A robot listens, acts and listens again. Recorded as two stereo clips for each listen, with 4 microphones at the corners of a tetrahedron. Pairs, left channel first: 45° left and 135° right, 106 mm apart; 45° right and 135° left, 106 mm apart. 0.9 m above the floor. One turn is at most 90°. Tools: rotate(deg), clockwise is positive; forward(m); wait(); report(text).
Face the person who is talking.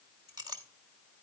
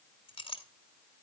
wait()
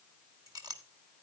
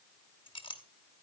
wait()
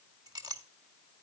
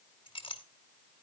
report("I can't make out anyone speaking to turn to.")